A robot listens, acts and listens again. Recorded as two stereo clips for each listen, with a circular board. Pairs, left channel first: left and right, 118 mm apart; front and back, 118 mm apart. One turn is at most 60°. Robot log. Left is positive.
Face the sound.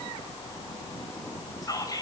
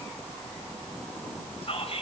note: The whispering: 30° left.
cmd yaw +30
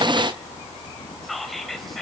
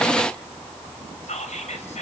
end: Facing the whispering, 2 to 4 m away.